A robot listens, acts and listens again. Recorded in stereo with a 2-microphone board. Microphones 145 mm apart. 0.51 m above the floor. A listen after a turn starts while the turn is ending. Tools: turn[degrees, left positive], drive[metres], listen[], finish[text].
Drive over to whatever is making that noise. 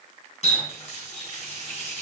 Thought: The running tap: about 50° left or 130° left.
Action: turn[50]
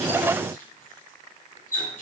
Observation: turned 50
Thought: So it is at 80° left.
Action: turn[80]
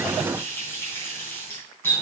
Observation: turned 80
Thought: The running tap is now 15° left.
Action: turn[15]
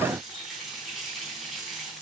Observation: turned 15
Action: drive[1.0]
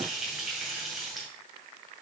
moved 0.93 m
Action: drive[1.0]
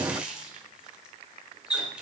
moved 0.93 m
Thought: The running tap is now 10° right.
Action: turn[-10]
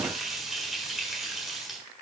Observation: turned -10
Action: drive[1.0]
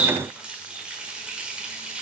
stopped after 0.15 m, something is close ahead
Thought: The running tap is now 10° right.
Action: turn[-10]
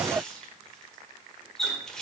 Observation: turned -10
Action: finish[I am next to the running tap.]